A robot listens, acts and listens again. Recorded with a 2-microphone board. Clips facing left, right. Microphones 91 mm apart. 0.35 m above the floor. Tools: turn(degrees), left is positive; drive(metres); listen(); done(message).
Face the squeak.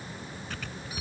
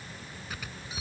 turn(degrees=-30)
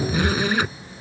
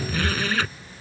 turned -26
turn(degrees=15)
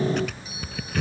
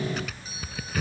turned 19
done("Facing the squeak.")